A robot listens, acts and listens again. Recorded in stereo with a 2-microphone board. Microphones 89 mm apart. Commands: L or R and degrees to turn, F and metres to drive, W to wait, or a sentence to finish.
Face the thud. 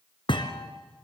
L65
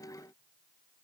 W
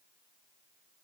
I heard a thud, but can't make it out now. It was about straight ahead or 50° left.